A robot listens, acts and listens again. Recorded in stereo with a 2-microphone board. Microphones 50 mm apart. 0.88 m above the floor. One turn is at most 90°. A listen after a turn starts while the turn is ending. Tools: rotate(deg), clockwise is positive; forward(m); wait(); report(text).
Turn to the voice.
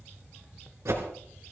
wait()
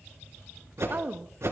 rotate(40)
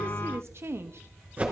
rotate(90)
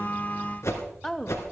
rotate(-10)
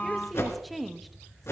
report("Found it: a woman speaking, straight ahead, 1 to 2 m away.")